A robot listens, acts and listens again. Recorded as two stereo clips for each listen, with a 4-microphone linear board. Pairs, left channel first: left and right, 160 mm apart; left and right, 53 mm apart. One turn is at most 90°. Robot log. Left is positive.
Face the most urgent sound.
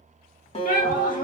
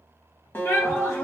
note: The shout: about 55° left or 125° left.
cmd yaw +55
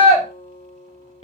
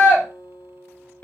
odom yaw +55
note: So it is at 45° left.
cmd yaw +45
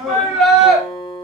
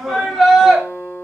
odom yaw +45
end: Facing the shout.